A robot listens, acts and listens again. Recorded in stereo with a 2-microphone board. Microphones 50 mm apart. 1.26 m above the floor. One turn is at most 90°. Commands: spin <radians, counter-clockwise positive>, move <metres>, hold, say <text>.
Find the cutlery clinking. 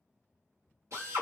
hold
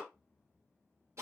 hold
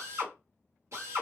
say I can't make out cutlery clinking to turn to.